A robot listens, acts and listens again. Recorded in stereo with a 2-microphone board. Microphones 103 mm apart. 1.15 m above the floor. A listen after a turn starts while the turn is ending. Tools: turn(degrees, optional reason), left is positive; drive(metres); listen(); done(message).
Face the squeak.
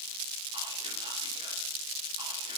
listen()
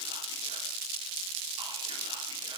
listen()
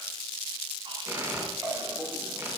turn(degrees=-25, reason="The squeak: about 25° right or 155° right.")
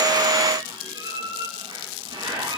turn(degrees=-130, reason="So it is at 130° right.")
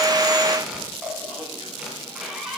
done("Facing the squeak, 2 to 4 m away.")